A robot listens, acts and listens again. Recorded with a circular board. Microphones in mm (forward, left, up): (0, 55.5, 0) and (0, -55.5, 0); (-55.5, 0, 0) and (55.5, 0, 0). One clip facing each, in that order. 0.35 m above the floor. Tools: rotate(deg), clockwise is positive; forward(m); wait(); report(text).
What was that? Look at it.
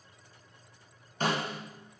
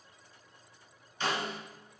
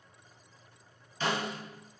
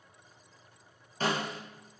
rotate(-45)
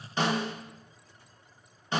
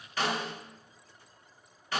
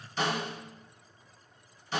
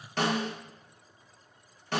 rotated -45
rotate(-25)
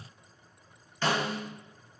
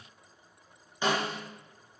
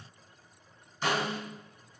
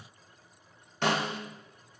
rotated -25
rotate(15)
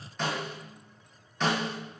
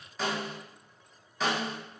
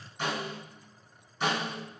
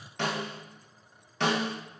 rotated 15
report("Facing the snare drum.")